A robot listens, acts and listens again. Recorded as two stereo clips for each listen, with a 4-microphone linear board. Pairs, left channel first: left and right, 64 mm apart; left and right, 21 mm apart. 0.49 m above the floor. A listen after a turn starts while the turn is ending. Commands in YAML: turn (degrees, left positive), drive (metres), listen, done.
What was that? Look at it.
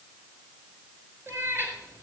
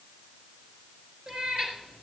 turn: -35
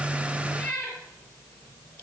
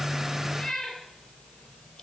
turn: 15
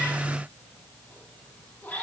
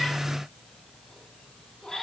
turn: 15
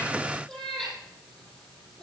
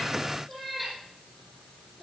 done: "Found it: a cat meowing, straight ahead."